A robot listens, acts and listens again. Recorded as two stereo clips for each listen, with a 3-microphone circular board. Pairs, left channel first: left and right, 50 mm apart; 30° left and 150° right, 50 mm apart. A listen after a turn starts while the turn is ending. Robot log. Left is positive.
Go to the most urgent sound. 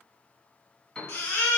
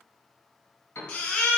note: The baby crying: 65° left.
cmd yaw +65
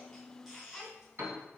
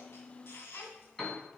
note: The baby crying is now 10° right.
cmd yaw -10
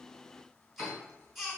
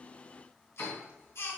cmd fwd 1.0
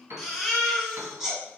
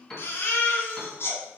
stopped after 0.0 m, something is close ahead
end: Blocked. The baby crying is further on, straight ahead.